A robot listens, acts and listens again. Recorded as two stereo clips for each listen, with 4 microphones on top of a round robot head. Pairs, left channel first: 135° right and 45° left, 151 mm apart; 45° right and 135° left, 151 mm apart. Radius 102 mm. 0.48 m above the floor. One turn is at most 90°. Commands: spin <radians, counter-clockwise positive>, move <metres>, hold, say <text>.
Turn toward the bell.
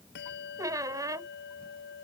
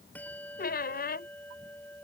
spin -1.57
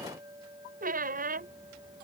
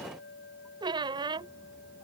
spin -0.44
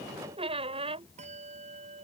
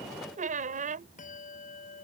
say Found it: a bell, straight ahead.